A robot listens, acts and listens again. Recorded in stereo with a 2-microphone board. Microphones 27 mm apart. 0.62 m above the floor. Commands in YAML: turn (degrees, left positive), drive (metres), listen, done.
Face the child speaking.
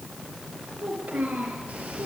turn: -90
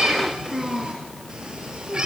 done: "Found it: a child speaking, straight ahead."